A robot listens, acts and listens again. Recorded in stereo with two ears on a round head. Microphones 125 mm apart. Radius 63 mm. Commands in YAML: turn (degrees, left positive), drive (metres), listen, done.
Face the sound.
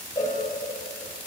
turn: 25
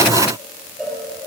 done: "Facing the cowbell."